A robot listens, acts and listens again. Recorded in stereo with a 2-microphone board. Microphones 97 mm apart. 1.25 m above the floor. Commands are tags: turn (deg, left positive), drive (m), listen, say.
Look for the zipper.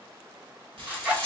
<turn deg="-30"/>
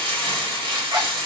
<listen/>
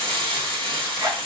<turn deg="-135"/>
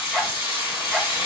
<say>Found it: a zipper, straight ahead.</say>